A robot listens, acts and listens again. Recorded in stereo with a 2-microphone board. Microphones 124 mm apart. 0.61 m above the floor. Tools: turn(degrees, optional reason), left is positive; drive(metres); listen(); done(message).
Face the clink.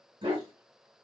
listen()
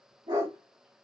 listen()
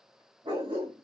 done("I can't make out a clink, only a dog barking.")